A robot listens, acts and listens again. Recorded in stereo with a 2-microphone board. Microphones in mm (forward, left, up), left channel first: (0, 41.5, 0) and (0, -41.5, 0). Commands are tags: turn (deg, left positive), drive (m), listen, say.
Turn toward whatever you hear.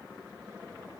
<listen/>
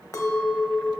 <turn deg="40"/>
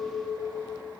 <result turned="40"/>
<turn deg="15"/>
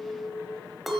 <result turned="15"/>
<say>Found it: a clink, straight ahead.</say>